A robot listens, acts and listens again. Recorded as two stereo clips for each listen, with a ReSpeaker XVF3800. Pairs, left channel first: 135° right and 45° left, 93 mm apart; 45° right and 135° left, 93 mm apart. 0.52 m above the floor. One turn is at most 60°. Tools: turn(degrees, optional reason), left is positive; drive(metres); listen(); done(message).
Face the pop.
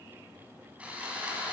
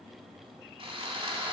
listen()
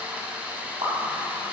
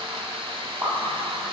turn(degrees=60, reason="The pop: 75° left.")
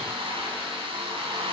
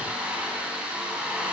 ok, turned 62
turn(degrees=10, reason="Nothing new. It was at 10° left.")
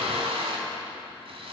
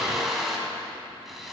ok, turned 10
done("I heard a pop from this way, but can't make it out now.")